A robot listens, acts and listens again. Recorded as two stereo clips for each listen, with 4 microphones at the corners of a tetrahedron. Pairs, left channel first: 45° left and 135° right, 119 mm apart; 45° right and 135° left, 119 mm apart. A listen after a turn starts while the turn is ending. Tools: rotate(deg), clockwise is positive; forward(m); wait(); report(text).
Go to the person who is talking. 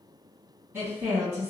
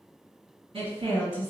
rotate(-155)
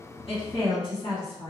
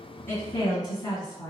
forward(1.0)
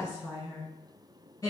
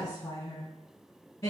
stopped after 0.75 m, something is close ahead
report("I am next to the woman speaking.")